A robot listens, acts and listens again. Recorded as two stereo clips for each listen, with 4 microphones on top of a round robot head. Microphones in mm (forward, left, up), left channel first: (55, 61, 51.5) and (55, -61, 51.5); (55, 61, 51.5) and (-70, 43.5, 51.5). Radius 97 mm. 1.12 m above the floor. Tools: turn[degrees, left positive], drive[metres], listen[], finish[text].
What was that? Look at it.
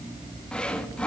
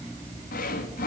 Thought: The sawing: 10° left.
Action: turn[10]
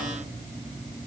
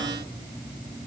Action: listen[]
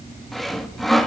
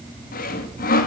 Action: finish[Facing the sawing.]